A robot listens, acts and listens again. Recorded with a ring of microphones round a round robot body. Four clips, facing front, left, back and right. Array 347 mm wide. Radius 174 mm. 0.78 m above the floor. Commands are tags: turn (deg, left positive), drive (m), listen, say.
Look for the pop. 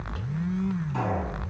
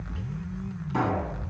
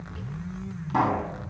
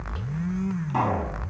<turn deg="-145"/>
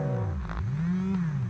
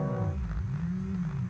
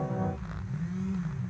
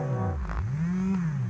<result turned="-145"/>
<say>I heard a pop from this way, but can't make it out now.</say>